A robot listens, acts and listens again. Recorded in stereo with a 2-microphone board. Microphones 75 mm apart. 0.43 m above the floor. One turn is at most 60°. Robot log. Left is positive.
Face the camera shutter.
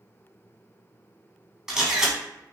cmd yaw -30
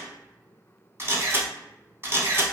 note: So it is at 140° right.
cmd yaw -60
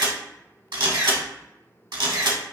note: The camera shutter is now 85° right.
cmd yaw -60
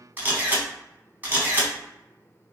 note: The camera shutter is now 25° right.
cmd yaw -25
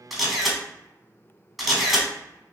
end: Found it: a camera shutter, straight ahead, under 1 m away.